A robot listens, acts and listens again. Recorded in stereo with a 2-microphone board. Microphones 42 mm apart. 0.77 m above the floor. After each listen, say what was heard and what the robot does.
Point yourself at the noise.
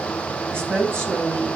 The woman speaking: about 60° right or 120° right. Turn 60° right.
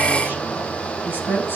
So it is at 50° right. Turn 50° right.
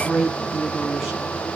The woman speaking is now 10° right. Turn 10° right.
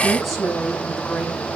Found it: a woman speaking, straight ahead.